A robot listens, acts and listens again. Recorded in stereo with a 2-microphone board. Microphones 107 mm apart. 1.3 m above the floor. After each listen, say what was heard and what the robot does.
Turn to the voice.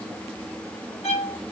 Keep listening.
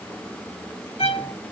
Keep listening.
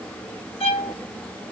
I can't make out anyone speaking to turn to.